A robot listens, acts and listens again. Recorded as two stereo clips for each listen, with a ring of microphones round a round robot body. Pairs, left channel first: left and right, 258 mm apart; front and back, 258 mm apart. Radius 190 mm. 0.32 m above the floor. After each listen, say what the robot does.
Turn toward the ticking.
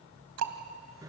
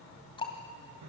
Turn 75° right.
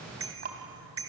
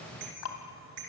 Turn 30° right.
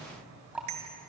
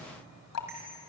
Facing the ticking, 2 to 4 m away.